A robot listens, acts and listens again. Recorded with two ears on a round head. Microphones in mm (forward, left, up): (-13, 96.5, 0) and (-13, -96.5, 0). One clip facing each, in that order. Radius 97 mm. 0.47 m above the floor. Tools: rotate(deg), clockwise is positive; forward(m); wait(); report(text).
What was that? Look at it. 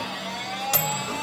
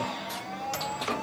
rotate(-70)
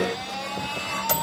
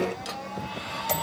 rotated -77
rotate(-15)
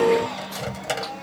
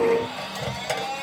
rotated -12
report("Found it: a microwave, straight ahead.")